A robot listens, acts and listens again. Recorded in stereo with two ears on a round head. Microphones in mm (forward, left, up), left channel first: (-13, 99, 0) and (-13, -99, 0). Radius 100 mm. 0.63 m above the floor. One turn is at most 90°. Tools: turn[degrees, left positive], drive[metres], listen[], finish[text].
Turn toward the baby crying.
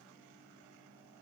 Action: listen[]
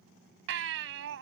Thought: The baby crying: about 65° right or 115° right.
Action: turn[-65]
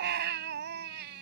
Thought: So it is at 50° right.
Action: turn[-50]
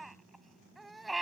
Action: finish[Facing the baby crying.]